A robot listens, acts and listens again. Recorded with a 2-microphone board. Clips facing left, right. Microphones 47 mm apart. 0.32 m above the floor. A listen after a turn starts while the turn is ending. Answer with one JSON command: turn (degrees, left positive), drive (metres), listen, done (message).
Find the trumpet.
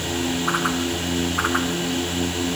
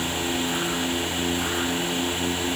{"listen": true}
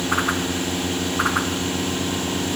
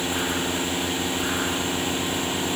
{"listen": true}
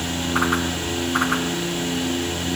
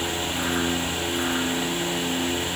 {"done": "I can't make out a trumpet to turn to."}